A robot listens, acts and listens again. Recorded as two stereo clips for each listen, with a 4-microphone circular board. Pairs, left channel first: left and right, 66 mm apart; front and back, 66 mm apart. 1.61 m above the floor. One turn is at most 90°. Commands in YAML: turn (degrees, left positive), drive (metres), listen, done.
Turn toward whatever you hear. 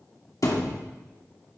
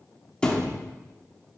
turn: 75
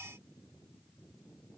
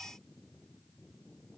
done: "I heard a thud from this way, but can't make it out now."